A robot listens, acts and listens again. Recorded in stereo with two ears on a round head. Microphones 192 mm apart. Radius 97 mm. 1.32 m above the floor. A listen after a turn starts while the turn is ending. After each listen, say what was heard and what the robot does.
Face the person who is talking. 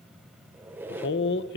The man speaking: about 60° left or 120° left. Turn 60° left.
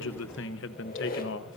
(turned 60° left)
So it is at 60° left. Turn 60° left.
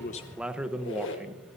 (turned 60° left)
Facing the man speaking.